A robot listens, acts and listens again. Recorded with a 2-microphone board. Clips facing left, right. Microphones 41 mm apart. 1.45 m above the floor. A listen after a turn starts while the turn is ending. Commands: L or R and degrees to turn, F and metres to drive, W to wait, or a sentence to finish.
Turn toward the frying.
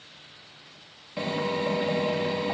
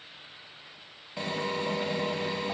W
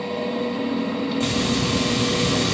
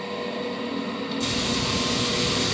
L40
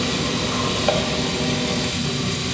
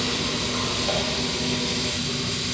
L100
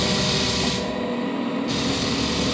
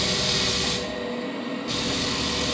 Found it: frying, straight ahead.